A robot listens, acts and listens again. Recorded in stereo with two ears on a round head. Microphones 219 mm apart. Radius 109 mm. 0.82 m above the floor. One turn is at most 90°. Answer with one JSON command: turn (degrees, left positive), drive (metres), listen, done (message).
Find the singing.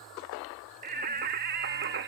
{"turn": -45}
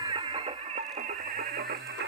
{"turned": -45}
{"turn": -40}
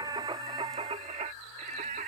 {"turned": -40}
{"turn": -35}
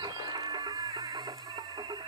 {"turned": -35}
{"turn": -20}
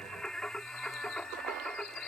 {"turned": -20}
{"done": "Found it: singing, straight ahead."}